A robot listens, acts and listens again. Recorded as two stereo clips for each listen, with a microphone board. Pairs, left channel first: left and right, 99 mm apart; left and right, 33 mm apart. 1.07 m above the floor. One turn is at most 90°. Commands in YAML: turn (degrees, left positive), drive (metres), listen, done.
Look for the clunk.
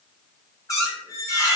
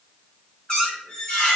listen: true
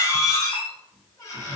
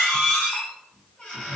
listen: true
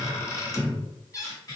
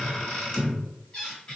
done: "I can't make out a clunk to turn to."